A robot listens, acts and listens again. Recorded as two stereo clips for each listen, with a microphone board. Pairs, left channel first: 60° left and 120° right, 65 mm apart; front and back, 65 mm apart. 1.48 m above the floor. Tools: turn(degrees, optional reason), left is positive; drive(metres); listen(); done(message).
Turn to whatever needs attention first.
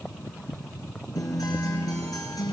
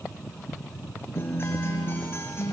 listen()
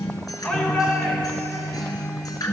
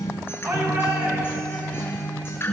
turn(degrees=140, reason="The shout: 140° left.")
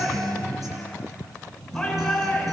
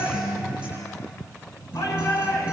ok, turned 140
turn(degrees=-20, reason="The shout is now 20° right.")
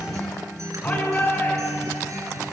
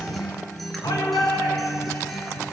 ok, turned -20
done("Found it: a shout, straight ahead.")